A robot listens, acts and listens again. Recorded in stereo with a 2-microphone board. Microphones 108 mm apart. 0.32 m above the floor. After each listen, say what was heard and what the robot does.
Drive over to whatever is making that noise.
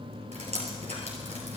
Turn 90° right.
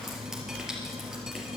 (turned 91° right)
Drive 1.0 m forward.
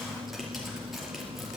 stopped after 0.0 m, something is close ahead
Keep listening.
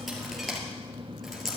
Something is in my way. I am facing the dripping but have not reached it.